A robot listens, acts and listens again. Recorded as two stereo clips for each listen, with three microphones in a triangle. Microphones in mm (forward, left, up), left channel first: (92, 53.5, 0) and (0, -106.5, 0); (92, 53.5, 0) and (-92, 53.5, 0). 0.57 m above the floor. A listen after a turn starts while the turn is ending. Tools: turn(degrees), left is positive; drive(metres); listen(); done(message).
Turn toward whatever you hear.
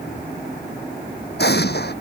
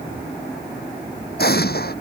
turn(degrees=30)
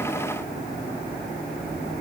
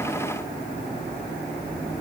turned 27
done("I heard an explosion from this way, but can't make it out now.")